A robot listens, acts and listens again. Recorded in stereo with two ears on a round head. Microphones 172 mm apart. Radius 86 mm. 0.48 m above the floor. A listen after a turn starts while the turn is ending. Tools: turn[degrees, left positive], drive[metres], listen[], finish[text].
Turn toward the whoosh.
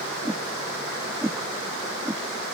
Action: turn[-30]
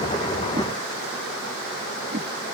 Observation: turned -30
Thought: So it is at 140° right.
Action: turn[-140]
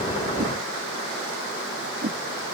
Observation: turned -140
Thought: The whoosh is now 45° right.
Action: turn[-45]
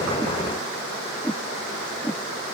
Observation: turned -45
Action: finish[Facing the whoosh.]